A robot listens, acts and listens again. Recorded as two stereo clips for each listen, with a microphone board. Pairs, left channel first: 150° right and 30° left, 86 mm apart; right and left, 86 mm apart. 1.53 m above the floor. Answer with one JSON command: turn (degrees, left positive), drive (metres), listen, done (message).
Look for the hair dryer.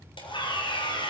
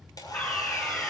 {"turn": -130}
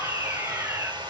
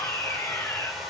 {"done": "Found it: a hair dryer, straight ahead."}